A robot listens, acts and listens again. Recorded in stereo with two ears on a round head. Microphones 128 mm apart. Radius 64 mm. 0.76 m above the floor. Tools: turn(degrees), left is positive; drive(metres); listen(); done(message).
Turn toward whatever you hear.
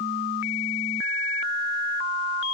listen()
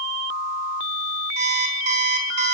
turn(degrees=-50)
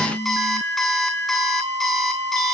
done("Facing the alarm clock, over 4 m away.")